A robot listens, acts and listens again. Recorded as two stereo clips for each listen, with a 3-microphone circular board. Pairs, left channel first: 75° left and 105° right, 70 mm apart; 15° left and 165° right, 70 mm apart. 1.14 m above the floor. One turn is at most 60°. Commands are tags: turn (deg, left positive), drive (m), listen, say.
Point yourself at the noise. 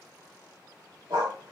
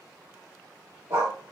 <turn deg="-60"/>
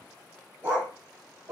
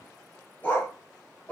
<turn deg="-50"/>
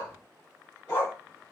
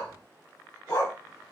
<turn deg="25"/>
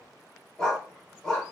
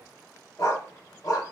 <say>Found it: a dog barking, straight ahead, 1 to 2 m away.</say>